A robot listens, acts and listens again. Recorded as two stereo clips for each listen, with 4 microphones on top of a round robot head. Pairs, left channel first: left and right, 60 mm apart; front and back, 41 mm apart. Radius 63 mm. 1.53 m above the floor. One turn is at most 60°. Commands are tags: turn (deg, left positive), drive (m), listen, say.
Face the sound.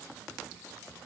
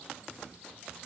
<listen/>
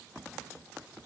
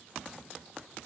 <listen/>
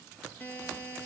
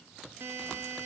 <turn deg="60"/>
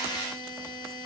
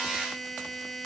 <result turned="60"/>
<turn deg="60"/>
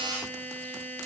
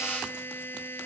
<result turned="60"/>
<turn deg="30"/>
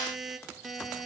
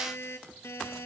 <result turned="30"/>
<say>Found it: a buzzer, straight ahead.</say>